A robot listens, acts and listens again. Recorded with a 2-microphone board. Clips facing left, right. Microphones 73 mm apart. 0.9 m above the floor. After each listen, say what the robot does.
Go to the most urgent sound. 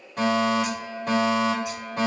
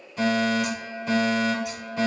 Turn 55° left.
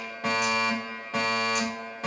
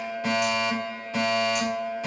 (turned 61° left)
Turn 50° left.
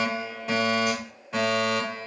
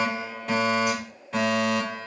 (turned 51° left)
Drive 1.0 m forward.
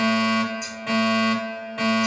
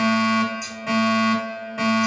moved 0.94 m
Drive 1.0 m forward.
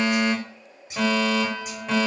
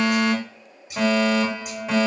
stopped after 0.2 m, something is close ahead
Turn 10° right.
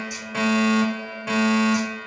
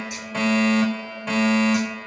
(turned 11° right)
Arrived at the fire alarm, straight ahead.